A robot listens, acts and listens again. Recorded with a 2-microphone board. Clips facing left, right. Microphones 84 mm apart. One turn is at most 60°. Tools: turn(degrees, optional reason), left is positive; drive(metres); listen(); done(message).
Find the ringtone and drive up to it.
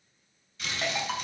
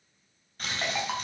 turn(degrees=-30)
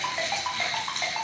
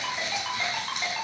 turn(degrees=20, reason="So it is at 20° left.")
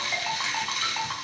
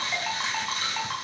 drive(metres=1.0)
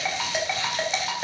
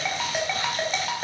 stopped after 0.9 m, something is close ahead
done("Blocked. The ringtone is further on, straight ahead.")